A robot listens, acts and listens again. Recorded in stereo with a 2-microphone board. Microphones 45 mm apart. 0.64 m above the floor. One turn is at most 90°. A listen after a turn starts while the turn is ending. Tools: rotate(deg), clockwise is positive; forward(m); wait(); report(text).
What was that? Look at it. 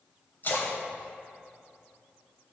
rotate(-45)
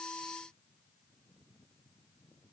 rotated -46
wait()
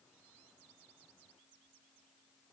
report("I heard a splash, but can't make it out now. It was about straight ahead or 90° left.")